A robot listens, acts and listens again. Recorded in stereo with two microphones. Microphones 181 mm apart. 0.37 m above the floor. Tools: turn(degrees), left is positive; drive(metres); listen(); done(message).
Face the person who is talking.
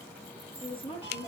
turn(degrees=30)
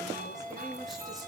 listen()
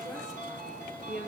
done("Found it: a woman speaking, straight ahead.")